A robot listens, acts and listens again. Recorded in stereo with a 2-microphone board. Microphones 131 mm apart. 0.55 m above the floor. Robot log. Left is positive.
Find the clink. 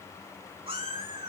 cmd idle
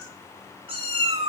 cmd idle
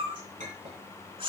cmd yaw -90
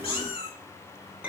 note: So it is at 10° right.
cmd yaw -10
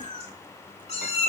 cmd idle
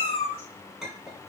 end: Facing the clink.